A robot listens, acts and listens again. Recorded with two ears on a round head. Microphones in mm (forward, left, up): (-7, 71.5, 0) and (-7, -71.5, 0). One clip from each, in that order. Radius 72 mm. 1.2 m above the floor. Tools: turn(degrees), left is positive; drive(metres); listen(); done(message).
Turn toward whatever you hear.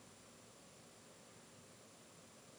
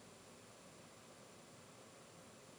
listen()
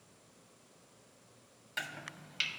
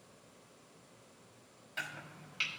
turn(degrees=30)
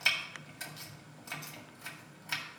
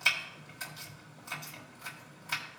done("Facing the chopping.")